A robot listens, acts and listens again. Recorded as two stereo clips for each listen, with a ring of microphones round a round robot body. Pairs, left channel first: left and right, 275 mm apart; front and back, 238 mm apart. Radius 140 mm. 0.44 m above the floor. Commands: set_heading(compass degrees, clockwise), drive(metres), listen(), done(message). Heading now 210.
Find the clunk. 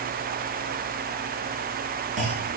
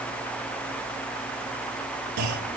set_heading(5)
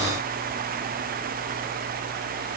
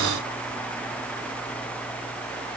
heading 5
done("Facing where the clunk came from. I can't hear it now.")